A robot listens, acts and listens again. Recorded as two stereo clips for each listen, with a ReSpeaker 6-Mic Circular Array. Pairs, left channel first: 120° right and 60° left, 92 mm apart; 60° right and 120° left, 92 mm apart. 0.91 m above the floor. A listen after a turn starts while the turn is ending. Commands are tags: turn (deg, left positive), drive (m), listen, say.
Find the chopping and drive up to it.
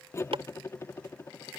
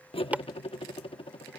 <turn deg="45"/>
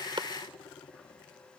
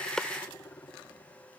<listen/>
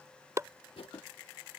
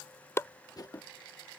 <drive m="1.0"/>
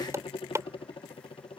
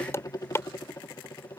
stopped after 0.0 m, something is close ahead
<say>Something is in my way. I am facing the chopping but have not reached it.</say>